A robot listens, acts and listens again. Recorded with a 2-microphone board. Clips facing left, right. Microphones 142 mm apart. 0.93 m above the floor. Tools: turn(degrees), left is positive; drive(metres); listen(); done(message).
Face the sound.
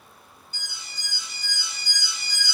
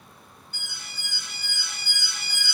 turn(degrees=-55)
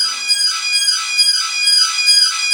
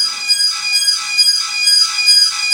turn(degrees=-45)
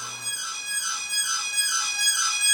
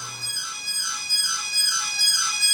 done("Found it: an alarm, straight ahead.")